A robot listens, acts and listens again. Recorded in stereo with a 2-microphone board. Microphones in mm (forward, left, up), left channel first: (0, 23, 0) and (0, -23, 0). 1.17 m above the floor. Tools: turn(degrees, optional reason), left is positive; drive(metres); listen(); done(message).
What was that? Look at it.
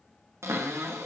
turn(degrees=-90)
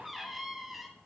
done("Found it: a cupboard door, straight ahead.")